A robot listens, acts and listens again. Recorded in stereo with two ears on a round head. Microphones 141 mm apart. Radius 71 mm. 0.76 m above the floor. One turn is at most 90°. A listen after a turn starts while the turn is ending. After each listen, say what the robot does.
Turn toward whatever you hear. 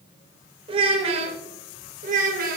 Turn 60° right.
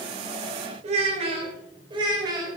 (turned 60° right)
Turn 25° right.
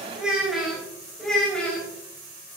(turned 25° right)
Found it: a child speaking, straight ahead.